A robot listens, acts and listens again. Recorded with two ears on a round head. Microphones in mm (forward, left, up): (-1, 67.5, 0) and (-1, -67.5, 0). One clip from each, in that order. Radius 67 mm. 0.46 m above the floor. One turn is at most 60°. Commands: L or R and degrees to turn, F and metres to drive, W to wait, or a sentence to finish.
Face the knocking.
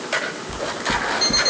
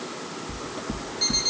R60
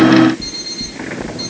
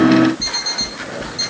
R55
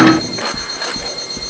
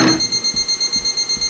R10
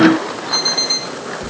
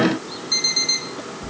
Found it: knocking, straight ahead.